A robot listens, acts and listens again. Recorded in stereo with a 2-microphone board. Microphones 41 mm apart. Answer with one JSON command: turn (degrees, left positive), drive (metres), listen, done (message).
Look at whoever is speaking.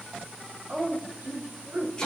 {"turn": -60}
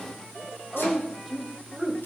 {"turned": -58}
{"done": "Found it: a woman speaking, straight ahead, 2 to 4 m away."}